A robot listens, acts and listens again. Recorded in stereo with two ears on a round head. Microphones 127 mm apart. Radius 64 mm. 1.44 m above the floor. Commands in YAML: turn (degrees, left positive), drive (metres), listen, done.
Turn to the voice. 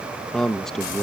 turn: 30
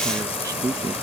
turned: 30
turn: -25
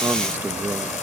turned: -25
turn: -15
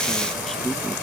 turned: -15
listen: true
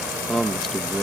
done: "Found it: a man speaking, straight ahead."